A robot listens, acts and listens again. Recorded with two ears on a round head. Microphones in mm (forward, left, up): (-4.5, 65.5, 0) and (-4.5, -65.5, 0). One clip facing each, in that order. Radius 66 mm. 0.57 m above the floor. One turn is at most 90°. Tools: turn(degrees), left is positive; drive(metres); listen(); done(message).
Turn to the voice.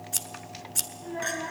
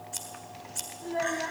turn(degrees=-50)
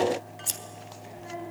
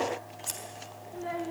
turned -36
turn(degrees=-90)
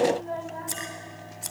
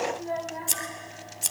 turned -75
turn(degrees=-15)
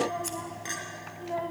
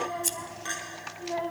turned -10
done("Facing the child speaking.")